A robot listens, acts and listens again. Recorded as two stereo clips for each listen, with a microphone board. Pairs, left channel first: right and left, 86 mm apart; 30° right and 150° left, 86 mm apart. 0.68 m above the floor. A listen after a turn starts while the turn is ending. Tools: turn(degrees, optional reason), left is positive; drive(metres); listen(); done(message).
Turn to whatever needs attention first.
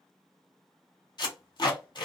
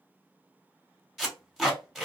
listen()
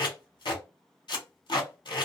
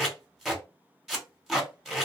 listen()
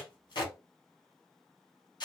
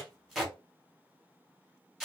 done("I can't make out anything urgent, only tape being pulled.")